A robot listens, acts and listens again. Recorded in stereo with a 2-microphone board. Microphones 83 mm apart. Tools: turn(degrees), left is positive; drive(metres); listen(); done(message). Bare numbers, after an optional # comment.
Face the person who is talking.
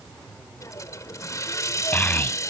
# The child speaking: about 20° left or 160° left.
turn(20)
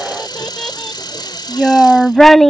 done("Facing the child speaking.")